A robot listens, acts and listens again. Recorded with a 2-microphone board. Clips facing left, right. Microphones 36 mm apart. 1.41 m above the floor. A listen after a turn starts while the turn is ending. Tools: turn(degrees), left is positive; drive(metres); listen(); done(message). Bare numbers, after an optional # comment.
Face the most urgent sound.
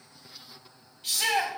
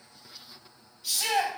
# The shout: about 45° left or 135° left.
turn(45)
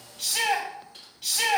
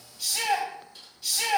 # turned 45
# So it is at 85° left.
turn(85)
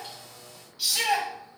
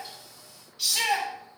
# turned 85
done("Found it: a shout, straight ahead, 2 to 4 m away.")